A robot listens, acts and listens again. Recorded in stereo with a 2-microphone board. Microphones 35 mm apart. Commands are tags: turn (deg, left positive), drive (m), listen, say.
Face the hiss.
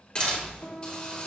<turn deg="20"/>
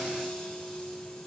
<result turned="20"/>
<listen/>
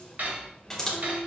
<say>Found it: a hiss, straight ahead, 2 to 4 m away.</say>